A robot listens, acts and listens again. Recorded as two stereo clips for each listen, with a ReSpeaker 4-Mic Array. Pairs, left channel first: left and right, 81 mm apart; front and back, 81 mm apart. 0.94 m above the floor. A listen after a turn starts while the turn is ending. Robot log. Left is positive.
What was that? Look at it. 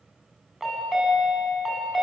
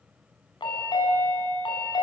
end: Facing the chime.